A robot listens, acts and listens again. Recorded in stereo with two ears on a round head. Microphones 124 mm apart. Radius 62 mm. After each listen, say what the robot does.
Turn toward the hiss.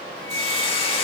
Turn 40° left.
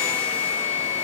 Keep listening.
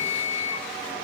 Keep listening.
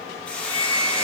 Turn 10° left.
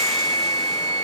Keep listening.
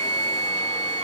Keep listening.
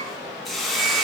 Facing the hiss, under 1 m away.